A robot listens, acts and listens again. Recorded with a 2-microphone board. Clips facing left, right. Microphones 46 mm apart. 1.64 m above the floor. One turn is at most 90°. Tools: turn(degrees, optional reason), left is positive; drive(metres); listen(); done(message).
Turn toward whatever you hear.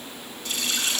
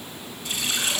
turn(degrees=-20, reason="The running tap: about 20° right or 160° right.")
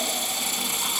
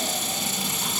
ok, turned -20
done("Found it: a running tap, straight ahead, 1 to 2 m away.")